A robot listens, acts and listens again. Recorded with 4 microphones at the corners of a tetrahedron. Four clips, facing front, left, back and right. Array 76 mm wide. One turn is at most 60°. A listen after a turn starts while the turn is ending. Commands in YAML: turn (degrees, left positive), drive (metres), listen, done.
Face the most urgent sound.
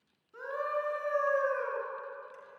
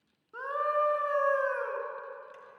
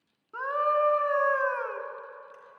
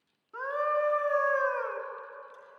turn: -60
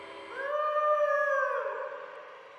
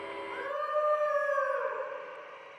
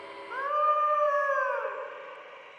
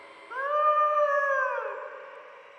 turn: -60
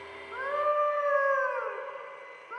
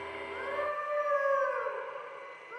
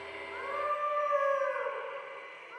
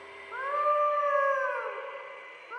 turn: -50
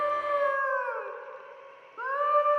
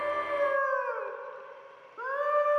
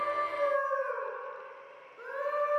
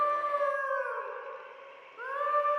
done: "Found it: a scream, straight ahead, 2 to 4 m away."